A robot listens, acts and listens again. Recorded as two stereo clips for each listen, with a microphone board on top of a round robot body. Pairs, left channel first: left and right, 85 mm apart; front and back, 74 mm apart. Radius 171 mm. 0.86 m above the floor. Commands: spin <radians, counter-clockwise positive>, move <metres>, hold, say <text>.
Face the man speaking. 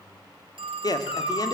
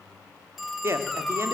spin 2.18
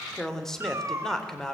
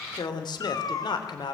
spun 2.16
say Found it: a man speaking, straight ahead.